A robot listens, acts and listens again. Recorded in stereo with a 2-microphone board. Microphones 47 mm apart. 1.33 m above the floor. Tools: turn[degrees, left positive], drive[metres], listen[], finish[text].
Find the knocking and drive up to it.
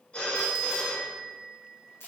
Action: listen[]
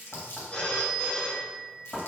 Thought: The knocking: about 25° left or 155° left.
Action: turn[25]
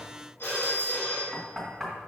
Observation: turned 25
Action: drive[1.0]
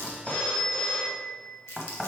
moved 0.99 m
Action: drive[1.0]
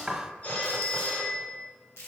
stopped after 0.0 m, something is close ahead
Thought: The knocking is now 10° right.
Action: turn[-10]
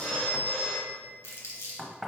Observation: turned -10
Action: finish[I am next to the knocking.]